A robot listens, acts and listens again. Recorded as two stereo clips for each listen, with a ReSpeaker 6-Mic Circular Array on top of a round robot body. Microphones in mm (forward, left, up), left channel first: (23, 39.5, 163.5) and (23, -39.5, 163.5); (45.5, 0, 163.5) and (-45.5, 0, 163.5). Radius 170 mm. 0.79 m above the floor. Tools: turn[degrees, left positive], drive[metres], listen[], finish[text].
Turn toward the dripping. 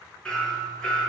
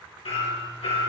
Action: listen[]
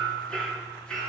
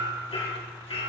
Action: listen[]
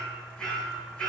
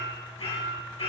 Action: finish[I can't make out dripping to turn to.]